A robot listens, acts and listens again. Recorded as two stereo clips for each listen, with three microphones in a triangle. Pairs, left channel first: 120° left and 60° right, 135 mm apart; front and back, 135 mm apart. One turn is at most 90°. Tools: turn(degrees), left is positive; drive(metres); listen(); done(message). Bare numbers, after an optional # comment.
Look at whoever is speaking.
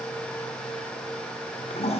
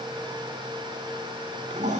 listen()
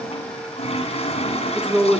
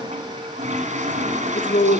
# The woman speaking: 25° left.
turn(25)
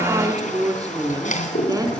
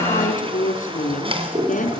done("Facing the woman speaking, over 4 m away.")